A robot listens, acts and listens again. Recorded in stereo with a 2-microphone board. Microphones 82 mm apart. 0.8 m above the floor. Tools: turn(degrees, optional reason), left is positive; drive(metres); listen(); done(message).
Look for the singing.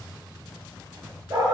listen()
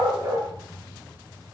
listen()
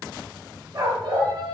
turn(degrees=-90)
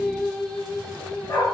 turn(degrees=10, reason="So it is at 10° left.")
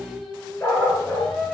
done("Found it: singing, straight ahead.")